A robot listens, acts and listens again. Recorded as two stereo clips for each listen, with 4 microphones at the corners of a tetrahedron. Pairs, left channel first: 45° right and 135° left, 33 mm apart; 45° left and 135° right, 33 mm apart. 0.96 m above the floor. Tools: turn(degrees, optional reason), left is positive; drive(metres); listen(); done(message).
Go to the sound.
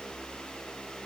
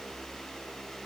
listen()
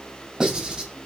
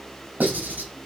turn(degrees=-155, reason="The writing: 155° right.")
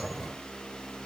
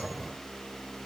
listen()
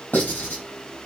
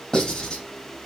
turn(degrees=-25, reason="The writing is now 25° right.")
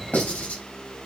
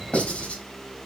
drive(metres=1.0)
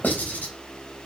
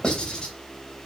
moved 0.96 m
turn(degrees=-15, reason="The writing is now 15° right.")
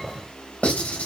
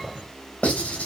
drive(metres=1.0)
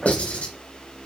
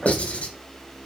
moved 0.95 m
drive(metres=1.0)
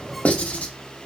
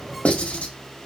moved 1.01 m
drive(metres=1.0)
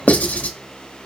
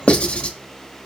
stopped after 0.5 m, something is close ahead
done("I am next to the writing.")